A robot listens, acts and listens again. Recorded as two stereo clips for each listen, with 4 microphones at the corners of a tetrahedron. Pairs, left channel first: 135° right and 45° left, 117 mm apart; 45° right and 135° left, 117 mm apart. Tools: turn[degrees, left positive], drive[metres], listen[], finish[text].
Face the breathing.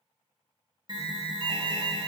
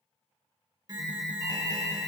Action: listen[]
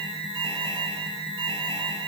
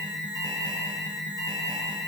Action: listen[]
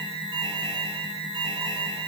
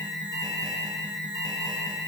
Action: finish[I can't make out breathing, only an alarm.]